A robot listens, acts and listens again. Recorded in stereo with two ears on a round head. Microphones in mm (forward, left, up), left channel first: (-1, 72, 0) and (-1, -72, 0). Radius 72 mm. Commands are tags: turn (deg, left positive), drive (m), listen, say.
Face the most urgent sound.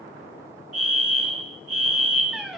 <turn deg="-55"/>
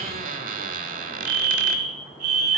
<turn deg="-65"/>
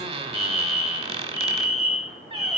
<turn deg="25"/>
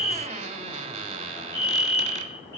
<turn deg="15"/>
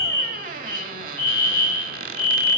<say>Facing the fire alarm.</say>